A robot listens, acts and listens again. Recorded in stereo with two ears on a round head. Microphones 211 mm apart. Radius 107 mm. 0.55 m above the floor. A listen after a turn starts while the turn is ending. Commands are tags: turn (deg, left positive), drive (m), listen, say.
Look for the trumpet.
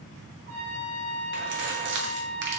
<turn deg="-50"/>
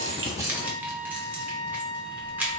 <turn deg="-80"/>
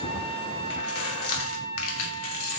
<turn deg="15"/>
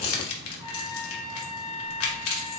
<say>Facing the trumpet, 2 to 4 m away.</say>